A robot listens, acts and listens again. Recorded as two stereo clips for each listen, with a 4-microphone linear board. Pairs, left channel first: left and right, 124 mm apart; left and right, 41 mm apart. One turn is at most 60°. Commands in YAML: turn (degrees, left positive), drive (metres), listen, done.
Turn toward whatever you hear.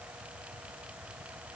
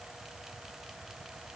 listen: true
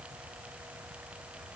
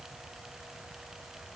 listen: true
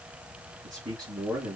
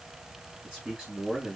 turn: -35
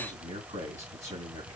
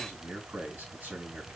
turn: -60
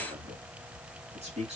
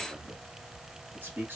turn: -55
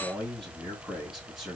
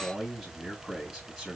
done: "Found it: a man speaking, straight ahead."